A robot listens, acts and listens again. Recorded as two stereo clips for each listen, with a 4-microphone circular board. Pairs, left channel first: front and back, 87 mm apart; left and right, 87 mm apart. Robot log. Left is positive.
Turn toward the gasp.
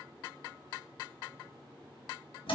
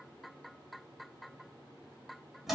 cmd idle
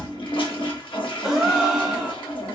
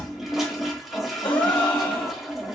note: The gasp: 95° left.
cmd yaw +95
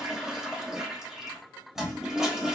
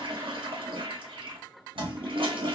end: I heard a gasp from this way, but can't make it out now.